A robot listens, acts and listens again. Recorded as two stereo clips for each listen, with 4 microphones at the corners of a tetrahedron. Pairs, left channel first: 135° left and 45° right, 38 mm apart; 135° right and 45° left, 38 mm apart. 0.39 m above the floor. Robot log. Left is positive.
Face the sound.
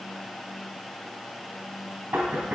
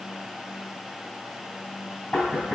note: The knocking: 70° right.
cmd yaw -70
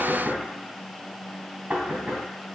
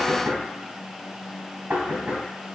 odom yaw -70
end: Facing the knocking, 2 to 4 m away.